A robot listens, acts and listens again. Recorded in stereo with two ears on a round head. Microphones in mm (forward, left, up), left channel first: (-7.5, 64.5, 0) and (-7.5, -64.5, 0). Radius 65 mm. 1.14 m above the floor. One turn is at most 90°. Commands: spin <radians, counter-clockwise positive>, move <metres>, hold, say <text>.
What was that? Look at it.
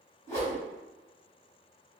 spin 0.35
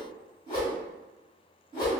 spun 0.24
spin 1.57
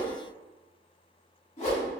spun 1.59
spin 0.96
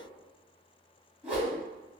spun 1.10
spin -0.17
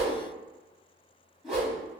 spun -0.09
say Found it: a whoosh, straight ahead.